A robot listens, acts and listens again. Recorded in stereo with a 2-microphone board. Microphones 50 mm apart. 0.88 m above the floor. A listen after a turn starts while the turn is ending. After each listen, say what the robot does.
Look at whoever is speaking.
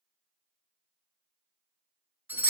Keep listening.
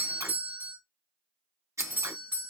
Keep listening.
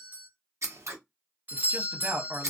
Turn 45° right.
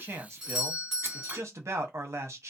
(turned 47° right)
Turn 85° right.
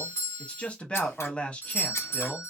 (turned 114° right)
Turn 30° left.
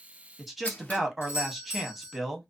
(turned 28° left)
Found it: a man speaking, straight ahead, under 1 m away.